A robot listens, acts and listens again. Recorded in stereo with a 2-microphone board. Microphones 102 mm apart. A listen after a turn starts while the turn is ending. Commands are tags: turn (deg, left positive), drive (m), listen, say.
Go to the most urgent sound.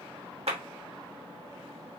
<listen/>
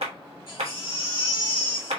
<turn deg="55"/>
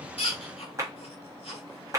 <turn deg="70"/>
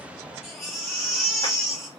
<drive m="1.0"/>
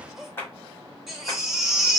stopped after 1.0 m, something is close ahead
<say>I am next to the baby crying.</say>